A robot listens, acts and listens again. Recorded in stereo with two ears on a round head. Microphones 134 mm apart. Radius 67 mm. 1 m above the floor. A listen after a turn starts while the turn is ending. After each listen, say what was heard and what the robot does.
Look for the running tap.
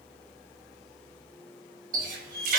The running tap: about 60° right or 120° right. Turn 60° right.
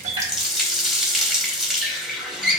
Facing the running tap, under 1 m away.